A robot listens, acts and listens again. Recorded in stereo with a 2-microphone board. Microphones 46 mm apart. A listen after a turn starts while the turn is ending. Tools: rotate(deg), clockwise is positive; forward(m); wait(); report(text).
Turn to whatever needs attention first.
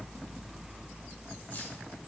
wait()
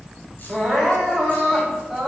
rotate(30)
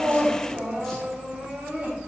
rotate(145)
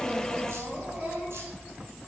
wait()
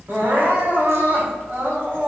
rotate(50)
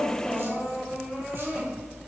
rotate(15)
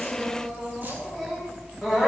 report("Facing the crying, 2 to 4 m away.")